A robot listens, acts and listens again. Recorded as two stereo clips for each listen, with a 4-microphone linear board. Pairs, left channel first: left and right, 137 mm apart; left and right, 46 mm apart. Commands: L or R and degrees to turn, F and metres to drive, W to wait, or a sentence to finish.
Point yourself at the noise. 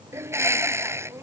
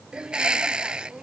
R20
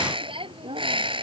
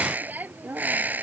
R140
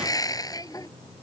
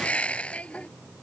L30
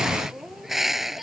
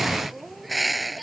Facing the bird.